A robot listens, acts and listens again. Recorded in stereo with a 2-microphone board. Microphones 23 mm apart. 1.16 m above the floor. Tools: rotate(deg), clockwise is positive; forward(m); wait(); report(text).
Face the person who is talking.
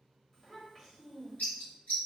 rotate(-30)
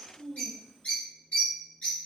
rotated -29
rotate(25)
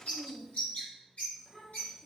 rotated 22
report("Facing the child speaking, 1 to 2 m away.")